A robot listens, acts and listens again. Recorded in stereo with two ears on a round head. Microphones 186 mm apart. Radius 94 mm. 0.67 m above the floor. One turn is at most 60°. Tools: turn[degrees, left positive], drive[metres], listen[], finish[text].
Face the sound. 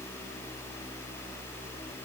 Action: listen[]
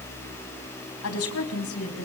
Action: turn[60]
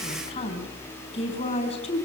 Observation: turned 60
Thought: So it is at 30° left.
Action: turn[30]
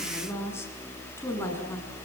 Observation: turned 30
Thought: The woman speaking is now 10° left.
Action: turn[10]
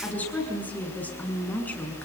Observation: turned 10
Action: finish[Found it: a woman speaking, straight ahead, over 4 m away.]